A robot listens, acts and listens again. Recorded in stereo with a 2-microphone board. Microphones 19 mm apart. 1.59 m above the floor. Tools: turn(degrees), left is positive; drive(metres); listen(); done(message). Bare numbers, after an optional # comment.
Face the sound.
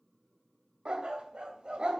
# The dog barking: about 60° right or 120° right.
turn(-60)
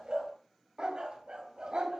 # So it is at 55° right.
turn(-55)
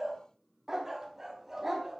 # The dog barking is now 15° right.
turn(-15)
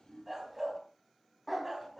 done("Found it: a dog barking, straight ahead, 2 to 4 m away.")